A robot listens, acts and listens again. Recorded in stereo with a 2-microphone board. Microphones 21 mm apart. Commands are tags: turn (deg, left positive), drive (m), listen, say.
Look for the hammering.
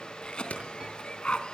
<turn deg="90"/>
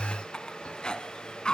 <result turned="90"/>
<listen/>
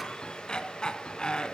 <listen/>
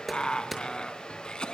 <say>Facing the hammering.</say>